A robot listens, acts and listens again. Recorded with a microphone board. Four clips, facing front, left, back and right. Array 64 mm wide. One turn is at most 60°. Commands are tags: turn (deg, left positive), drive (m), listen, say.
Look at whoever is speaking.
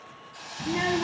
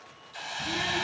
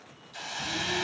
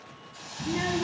<turn deg="-10"/>
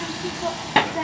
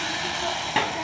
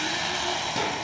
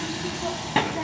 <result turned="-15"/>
<say>Facing the child speaking.</say>